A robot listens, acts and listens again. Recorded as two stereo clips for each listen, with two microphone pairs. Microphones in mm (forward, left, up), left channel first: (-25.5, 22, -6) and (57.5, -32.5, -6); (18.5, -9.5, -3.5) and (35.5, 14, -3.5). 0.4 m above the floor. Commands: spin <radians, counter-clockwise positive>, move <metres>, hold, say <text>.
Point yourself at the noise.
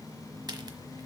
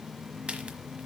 spin 0.17
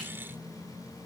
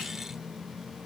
say Facing where the crack came from. I can't hear it now.